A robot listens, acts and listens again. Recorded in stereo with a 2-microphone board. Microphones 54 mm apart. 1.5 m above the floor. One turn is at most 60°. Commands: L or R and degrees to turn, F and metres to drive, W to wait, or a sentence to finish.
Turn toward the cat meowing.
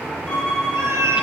R60
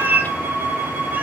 R35
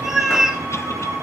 R10
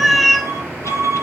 Facing the cat meowing, 1 to 2 m away.